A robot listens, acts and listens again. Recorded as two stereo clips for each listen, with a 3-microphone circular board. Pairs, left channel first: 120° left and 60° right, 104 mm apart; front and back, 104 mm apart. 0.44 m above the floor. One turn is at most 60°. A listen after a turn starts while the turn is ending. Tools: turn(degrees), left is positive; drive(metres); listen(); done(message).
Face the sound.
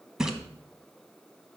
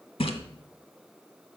turn(degrees=25)
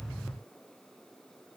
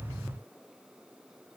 done("Facing where the splash came from. I can't hear it now.")